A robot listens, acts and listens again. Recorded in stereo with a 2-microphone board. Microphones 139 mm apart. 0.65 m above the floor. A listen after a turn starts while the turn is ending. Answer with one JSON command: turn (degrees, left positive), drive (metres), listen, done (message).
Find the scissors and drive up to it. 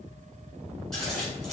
{"turn": 30}
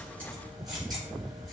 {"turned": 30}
{"listen": true}
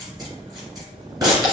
{"turn": -30}
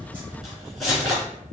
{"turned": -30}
{"drive": 1.0}
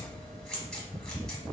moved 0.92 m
{"drive": 1.0}
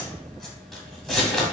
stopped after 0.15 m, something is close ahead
{"done": "I am next to the scissors."}